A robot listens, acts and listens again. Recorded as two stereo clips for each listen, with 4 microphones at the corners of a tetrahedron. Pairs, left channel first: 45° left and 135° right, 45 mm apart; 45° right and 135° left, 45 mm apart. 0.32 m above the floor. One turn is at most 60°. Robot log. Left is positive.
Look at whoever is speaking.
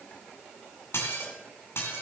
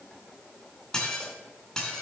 cmd idle
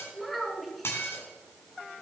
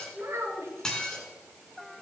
note: The child speaking: 135° left.
cmd yaw +60
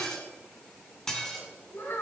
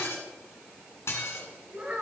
note: The child speaking is now 75° left.
cmd yaw +60
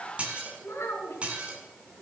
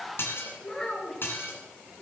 note: The child speaking is now 30° left.
cmd yaw +30
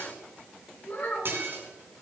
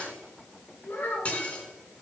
end: Found it: a child speaking, straight ahead, 2 to 4 m away.